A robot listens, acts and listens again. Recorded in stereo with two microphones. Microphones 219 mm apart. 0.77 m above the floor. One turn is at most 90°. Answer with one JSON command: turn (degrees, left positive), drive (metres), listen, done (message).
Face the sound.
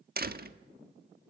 {"turn": -45}
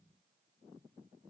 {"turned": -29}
{"listen": true}
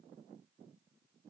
{"done": "I heard a door slam, but can't make it out now. It was about 15° right or 105° right."}